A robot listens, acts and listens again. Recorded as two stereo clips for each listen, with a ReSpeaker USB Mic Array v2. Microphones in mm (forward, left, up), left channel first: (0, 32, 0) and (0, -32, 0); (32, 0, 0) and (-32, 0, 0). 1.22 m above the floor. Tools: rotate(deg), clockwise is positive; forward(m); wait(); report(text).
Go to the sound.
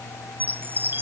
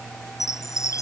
rotate(35)
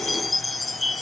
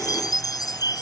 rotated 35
forward(1.0)
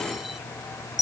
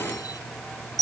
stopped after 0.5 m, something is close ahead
report("Blocked. The chime is further on, straight ahead.")